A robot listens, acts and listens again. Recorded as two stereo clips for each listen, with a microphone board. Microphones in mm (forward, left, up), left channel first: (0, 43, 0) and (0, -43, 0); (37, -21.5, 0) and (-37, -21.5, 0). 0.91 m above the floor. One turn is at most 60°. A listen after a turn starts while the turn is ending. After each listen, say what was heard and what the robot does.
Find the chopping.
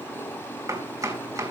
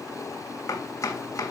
The chopping: 45° right. Turn 45° right.
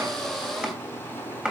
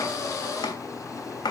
The chopping is now 10° right. Turn 10° right.
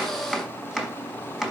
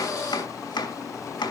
Facing the chopping.